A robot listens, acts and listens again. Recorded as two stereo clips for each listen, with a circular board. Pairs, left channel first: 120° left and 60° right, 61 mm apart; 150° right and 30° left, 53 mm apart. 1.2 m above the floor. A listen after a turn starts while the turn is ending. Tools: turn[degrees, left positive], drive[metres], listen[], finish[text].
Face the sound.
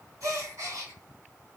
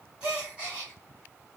Thought: The gasp: 40° right.
Action: turn[-40]
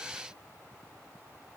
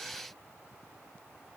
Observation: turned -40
Action: finish[I heard a gasp from this way, but can't make it out now.]